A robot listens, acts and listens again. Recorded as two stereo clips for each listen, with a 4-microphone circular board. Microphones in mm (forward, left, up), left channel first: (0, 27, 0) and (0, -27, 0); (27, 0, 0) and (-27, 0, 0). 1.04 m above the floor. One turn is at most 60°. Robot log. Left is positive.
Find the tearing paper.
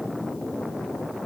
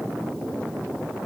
cmd idle
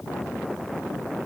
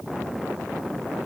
cmd idle
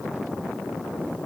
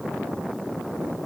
end: I can't make out tearing paper to turn to.